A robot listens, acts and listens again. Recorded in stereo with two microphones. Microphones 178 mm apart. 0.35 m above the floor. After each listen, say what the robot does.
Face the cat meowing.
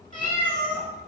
Turn 50° left.
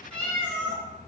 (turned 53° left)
Turn 10° left.
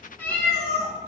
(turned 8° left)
Turn 15° left.
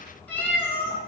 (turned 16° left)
Turn 15° left.
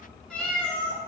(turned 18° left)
Turn 10° left.
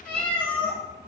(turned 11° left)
Turn 10° left.
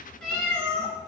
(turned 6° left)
Found it: a cat meowing, straight ahead.